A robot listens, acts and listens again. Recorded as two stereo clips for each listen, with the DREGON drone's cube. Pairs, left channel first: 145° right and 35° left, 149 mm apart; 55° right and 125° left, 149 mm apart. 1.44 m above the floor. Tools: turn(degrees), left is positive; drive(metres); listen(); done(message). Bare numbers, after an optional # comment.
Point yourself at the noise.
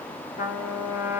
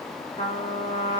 # The trumpet: 115° right.
turn(-115)
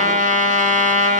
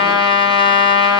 done("Facing the trumpet, 1 to 2 m away.")